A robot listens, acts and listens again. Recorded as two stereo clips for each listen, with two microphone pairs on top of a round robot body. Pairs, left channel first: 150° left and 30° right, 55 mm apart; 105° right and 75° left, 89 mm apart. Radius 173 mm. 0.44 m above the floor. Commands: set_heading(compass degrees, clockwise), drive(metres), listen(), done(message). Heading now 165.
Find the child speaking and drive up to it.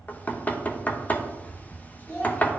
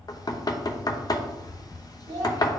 set_heading(90)
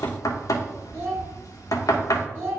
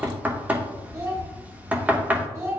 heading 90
set_heading(80)
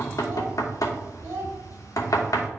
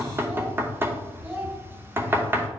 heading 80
drive(1.0)
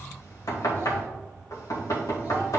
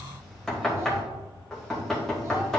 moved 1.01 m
listen()
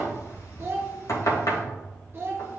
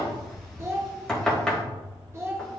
set_heading(70)
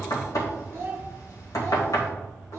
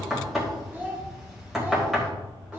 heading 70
drive(1.0)
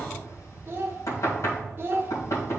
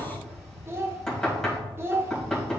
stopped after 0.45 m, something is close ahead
set_heading(60)
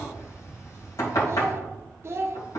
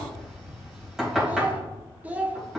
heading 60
done("Arrived at the child speaking, straight ahead.")